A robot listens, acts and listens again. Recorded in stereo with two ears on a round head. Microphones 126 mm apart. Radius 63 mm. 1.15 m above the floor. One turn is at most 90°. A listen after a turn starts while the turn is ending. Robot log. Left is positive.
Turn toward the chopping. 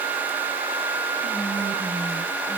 cmd idle
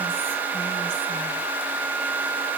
cmd idle
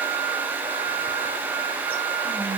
end: I can't make out chopping to turn to.